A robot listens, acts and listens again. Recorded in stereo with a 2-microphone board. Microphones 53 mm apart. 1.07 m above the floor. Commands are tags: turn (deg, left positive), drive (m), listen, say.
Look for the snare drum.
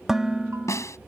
<turn deg="75"/>
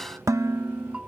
<listen/>
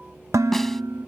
<listen/>
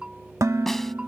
<say>I heard a snare drum, but can't make it out now. It was about straight ahead or 30° left.</say>